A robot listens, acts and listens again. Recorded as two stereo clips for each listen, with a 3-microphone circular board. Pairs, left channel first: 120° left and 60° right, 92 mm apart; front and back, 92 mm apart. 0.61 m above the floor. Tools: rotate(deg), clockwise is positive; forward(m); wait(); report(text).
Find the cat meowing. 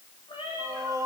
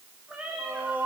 rotate(-100)
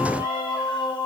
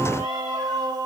wait()
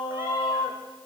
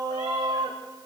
wait()
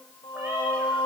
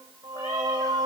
report("Facing where the cat meowing came from. I can't hear it now.")